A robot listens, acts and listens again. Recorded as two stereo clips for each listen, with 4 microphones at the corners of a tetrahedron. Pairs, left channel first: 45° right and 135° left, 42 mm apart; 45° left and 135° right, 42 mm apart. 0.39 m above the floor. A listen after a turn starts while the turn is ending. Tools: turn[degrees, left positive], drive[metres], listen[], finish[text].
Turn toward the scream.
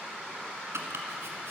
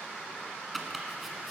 Action: listen[]
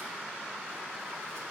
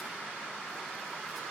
Action: listen[]
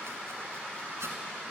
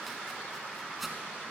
Action: finish[I can't make out a scream to turn to.]